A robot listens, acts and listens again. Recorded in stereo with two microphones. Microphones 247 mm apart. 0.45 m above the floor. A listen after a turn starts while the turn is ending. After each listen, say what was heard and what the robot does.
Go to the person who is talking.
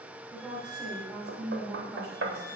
Turn 30° left.
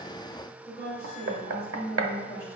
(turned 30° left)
So it is at 150° left. Turn 150° left.
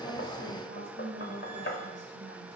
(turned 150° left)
The woman speaking is now 45° right. Turn 45° right.
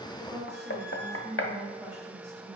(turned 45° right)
Drive 1.0 m forward.
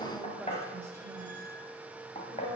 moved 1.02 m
Drive 1.0 m forward.
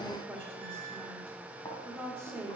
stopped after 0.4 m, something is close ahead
I am next to the woman speaking.